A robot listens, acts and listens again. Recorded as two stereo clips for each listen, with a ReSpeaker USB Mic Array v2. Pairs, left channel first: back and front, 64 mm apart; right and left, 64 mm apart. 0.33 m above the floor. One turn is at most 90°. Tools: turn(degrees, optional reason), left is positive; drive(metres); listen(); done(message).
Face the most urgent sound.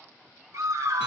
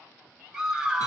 turn(degrees=10, reason="The scream: 10° left.")
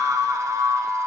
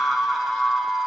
done("Found it: a scream, straight ahead, 1 to 2 m away.")